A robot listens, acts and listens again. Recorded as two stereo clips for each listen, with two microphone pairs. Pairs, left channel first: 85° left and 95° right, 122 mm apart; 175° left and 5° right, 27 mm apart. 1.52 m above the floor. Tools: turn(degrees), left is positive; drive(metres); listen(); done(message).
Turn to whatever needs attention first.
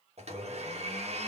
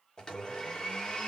listen()
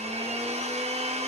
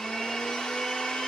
listen()
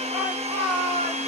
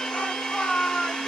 turn(degrees=-170)
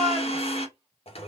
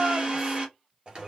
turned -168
done("Facing the shout, 1 to 2 m away.")